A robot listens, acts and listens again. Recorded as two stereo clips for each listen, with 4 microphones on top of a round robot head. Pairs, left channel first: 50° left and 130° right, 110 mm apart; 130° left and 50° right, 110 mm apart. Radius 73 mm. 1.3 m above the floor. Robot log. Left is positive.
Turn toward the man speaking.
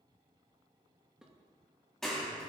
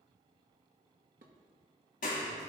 cmd idle
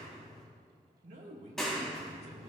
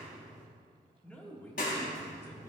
note: The man speaking: 155° right.
cmd yaw -155
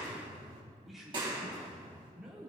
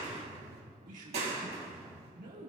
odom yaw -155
note: The man speaking is now 50° right.
cmd yaw -50
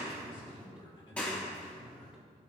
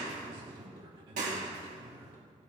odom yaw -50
end: Found it: a man speaking, straight ahead.